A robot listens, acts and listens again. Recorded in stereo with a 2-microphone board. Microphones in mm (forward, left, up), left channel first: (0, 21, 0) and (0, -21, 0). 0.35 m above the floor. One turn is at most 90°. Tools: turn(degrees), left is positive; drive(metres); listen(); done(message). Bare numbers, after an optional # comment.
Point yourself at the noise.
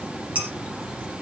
listen()
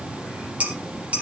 # The dishes clattering: about 35° right or 145° right.
turn(-35)
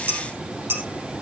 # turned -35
# So it is at 110° right.
turn(-90)
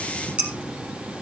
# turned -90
# The dishes clattering is now 30° right.
turn(-30)
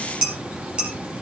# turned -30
# The dishes clattering is now 20° right.
turn(-20)
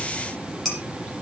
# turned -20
done("Facing the dishes clattering.")